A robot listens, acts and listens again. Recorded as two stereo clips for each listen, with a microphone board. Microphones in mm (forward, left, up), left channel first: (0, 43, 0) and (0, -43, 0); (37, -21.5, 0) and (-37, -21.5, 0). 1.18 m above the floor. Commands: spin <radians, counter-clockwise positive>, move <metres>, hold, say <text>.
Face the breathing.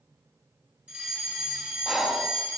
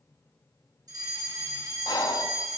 say Facing the breathing, under 1 m away.